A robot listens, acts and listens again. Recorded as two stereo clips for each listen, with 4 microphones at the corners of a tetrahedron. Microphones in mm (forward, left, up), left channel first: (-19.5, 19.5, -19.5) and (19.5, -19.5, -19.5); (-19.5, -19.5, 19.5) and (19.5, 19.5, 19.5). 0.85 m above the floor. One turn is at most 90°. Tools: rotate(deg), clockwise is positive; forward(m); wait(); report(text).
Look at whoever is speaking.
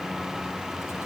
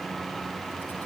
wait()
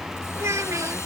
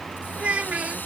rotate(20)
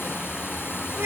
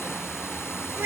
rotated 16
report("Facing the child speaking.")